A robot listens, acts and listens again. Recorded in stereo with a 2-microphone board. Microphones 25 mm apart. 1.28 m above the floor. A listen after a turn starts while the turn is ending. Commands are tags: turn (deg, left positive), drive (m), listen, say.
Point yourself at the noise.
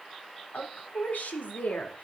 <turn deg="90"/>
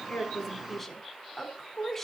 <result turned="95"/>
<turn deg="15"/>
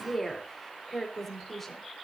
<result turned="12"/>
<turn deg="15"/>
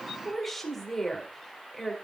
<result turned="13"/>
<turn deg="10"/>
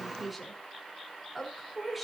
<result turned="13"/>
<say>Found it: a woman speaking, straight ahead.</say>